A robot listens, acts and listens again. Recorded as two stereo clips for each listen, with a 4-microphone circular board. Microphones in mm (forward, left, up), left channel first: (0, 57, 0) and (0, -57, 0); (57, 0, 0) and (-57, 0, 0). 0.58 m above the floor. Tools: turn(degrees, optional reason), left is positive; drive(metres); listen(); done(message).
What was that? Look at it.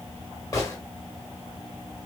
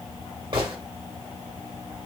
turn(degrees=145, reason="The gunshot: 145° left.")
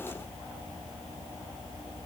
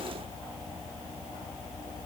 done("Facing where the gunshot came from. I can't hear it now.")